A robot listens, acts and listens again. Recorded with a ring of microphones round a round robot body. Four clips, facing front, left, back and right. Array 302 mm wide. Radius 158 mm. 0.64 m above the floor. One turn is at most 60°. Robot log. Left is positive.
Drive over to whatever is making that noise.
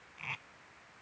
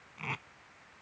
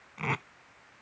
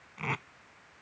note: The tape being pulled: 160° right.
cmd yaw -60
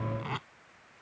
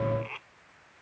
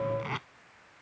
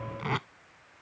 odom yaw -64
note: The tape being pulled is now 95° right.
cmd yaw -60
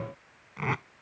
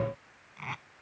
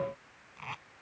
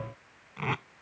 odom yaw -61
note: The tape being pulled is now 35° right.
cmd yaw -35
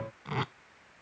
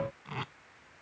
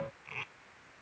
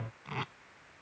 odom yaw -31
cmd fwd 1.0
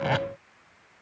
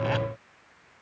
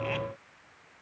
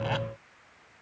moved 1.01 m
cmd fwd 1.0
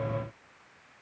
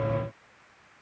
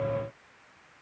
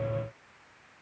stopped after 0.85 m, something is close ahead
cmd idle
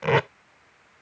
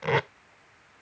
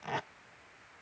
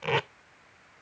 note: The tape being pulled is now 10° left.
cmd yaw +10
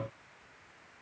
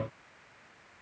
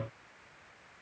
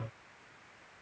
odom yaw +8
cmd idle
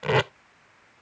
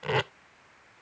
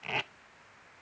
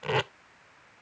end: Arrived at the tape being pulled, straight ahead.